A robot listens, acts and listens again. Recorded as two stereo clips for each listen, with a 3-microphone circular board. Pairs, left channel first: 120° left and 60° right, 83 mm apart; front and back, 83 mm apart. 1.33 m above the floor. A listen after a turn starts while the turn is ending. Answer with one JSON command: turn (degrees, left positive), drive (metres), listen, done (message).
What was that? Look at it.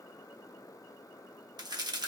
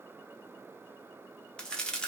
{"turn": -80}
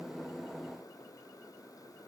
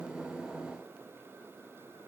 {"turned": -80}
{"done": "I heard a crack from this way, but can't make it out now."}